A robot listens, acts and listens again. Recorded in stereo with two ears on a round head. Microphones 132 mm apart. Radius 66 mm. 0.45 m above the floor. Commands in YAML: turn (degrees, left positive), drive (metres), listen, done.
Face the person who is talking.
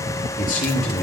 turn: 65
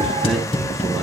listen: true
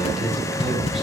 listen: true
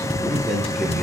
done: "Found it: a man speaking, straight ahead."